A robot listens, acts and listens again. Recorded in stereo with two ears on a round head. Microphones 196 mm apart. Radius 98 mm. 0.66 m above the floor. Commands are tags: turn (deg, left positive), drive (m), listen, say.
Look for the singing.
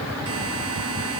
<listen/>
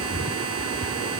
<listen/>
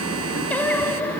<turn deg="30"/>
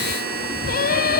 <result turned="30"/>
<turn deg="140"/>
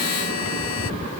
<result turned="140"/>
<listen/>
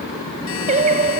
<turn deg="-30"/>
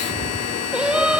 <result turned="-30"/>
<say>Found it: singing, straight ahead.</say>